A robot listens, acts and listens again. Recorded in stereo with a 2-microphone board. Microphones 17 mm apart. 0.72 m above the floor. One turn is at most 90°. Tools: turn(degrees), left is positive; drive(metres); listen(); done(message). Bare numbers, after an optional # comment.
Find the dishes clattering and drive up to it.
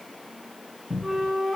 listen()
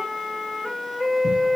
listen()
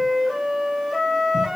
done("I can't make out dishes clattering to turn to.")